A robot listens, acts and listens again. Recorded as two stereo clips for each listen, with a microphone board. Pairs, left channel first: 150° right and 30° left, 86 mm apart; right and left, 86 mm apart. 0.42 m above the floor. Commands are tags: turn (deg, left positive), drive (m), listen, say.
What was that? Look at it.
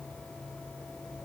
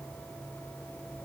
<listen/>
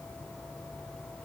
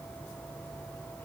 <listen/>
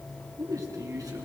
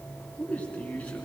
<turn deg="-15"/>
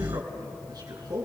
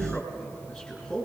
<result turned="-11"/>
<say>Found it: a man speaking, straight ahead.</say>